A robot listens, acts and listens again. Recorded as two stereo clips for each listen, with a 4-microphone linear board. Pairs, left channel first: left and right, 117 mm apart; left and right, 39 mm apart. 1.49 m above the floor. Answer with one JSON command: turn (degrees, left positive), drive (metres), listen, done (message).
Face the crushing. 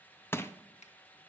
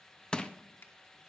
{"turn": 20}
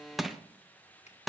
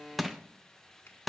{"done": "Found it: crushing, straight ahead, under 1 m away."}